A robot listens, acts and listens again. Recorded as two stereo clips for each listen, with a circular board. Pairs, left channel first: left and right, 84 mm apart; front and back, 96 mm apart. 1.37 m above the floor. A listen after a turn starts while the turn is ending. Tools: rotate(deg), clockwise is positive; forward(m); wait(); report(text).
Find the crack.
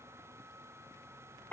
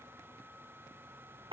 wait()
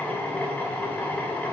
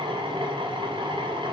wait()
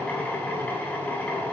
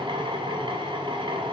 report("I can't make out a crack to turn to.")